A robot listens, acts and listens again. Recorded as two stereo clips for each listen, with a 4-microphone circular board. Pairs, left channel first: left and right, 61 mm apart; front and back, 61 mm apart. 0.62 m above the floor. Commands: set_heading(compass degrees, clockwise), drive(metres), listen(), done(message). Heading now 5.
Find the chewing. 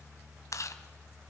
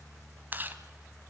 set_heading(245)
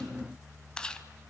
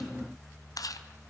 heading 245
set_heading(230)
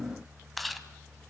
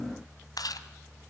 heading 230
done("Found it: chewing, straight ahead.")